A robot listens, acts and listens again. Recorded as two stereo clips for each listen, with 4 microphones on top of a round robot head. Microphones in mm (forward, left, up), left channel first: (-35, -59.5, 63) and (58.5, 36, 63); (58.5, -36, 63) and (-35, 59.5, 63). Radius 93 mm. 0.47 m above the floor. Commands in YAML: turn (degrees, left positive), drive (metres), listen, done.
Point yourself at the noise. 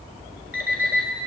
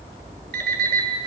turn: 125
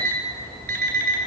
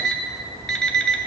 turn: 40
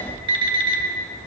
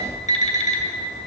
turn: -10
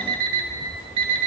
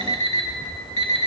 done: "Facing the alarm clock, 1 to 2 m away."